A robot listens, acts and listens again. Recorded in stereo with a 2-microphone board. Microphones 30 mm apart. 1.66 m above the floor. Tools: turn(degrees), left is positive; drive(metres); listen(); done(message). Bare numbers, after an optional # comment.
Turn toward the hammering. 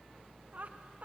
listen()
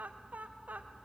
listen()
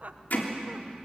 # The hammering: about 65° left or 115° left.
turn(65)
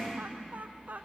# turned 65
listen()
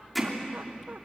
done("Found it: hammering, straight ahead.")